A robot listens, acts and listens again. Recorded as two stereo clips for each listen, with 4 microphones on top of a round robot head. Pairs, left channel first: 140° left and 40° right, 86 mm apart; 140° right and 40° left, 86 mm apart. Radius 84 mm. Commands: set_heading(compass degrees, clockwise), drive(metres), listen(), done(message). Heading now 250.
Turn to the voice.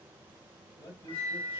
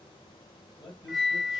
set_heading(70)
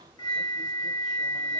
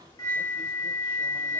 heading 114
set_heading(69)
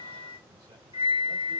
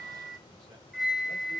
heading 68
listen()
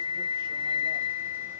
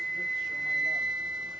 done("Facing where the man speaking came from. I can't hear it now.")